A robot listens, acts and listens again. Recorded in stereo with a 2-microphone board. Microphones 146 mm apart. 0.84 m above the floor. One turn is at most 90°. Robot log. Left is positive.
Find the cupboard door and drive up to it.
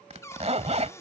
note: The cupboard door: about 20° left or 160° left.
cmd yaw +20
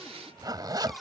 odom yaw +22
cmd fwd 1.0
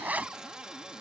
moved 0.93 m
cmd fwd 1.0
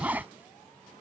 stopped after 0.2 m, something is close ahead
cmd idle
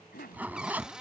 end: I am next to the cupboard door.